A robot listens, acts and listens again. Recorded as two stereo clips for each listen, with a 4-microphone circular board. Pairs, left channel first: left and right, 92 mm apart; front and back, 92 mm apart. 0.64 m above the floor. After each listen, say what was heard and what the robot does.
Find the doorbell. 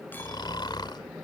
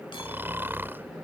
Keep listening.
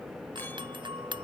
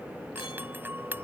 The doorbell: 115° right. Turn 115° right.
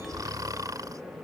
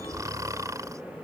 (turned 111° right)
Keep listening.
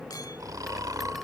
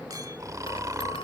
Keep listening.
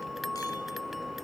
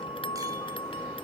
Facing the doorbell.